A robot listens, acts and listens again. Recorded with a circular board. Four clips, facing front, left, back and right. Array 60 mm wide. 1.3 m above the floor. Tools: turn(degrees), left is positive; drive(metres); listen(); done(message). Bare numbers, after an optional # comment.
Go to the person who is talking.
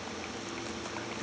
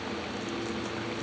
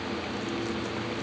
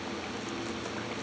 listen()
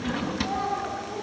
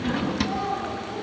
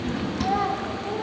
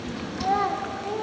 # The child speaking: 115° right.
turn(-115)
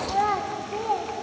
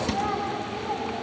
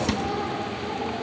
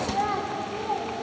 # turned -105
# The child speaking is now 10° right.
turn(-10)
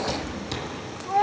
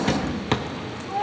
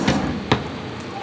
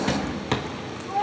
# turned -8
drive(1.0)
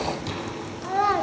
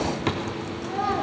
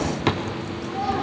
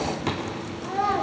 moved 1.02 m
drive(1.0)
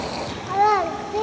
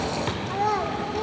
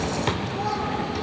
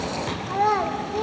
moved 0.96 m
# The child speaking is now 10° right.
turn(-10)
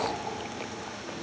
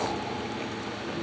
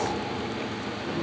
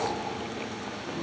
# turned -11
listen()
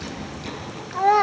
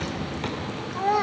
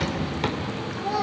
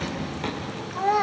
drive(1.0)
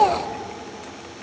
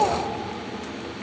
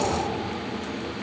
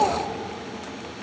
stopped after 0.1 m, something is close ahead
done("Arrived at the child speaking, straight ahead.")